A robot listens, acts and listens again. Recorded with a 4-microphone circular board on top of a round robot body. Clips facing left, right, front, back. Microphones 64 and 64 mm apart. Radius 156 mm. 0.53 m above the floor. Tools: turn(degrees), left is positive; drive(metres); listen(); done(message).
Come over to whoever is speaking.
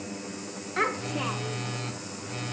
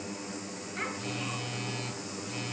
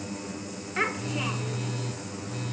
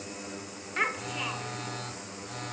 turn(degrees=90)
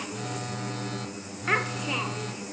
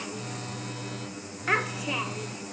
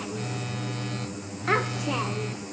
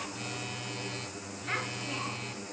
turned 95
drive(metres=1.0)
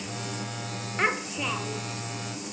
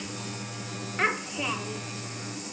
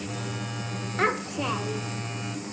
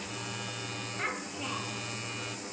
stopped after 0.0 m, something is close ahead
done("Something is in my way. I am facing the child speaking but have not reached it.")